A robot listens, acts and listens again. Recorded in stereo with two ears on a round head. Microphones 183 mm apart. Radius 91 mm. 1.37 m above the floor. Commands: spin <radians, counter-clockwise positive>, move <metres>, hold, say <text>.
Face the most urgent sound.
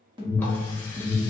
spin -0.44
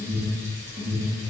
spin -2.36
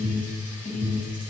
spin 0.44
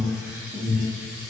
spin -0.26
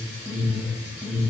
say Found it: an alarm, straight ahead, 1 to 2 m away.